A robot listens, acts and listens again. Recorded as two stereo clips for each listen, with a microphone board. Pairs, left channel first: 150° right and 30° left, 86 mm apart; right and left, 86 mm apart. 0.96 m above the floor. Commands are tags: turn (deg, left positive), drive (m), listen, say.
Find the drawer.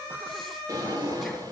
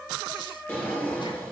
<turn deg="-20"/>
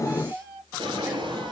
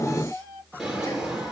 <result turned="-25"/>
<say>Facing the drawer, over 4 m away.</say>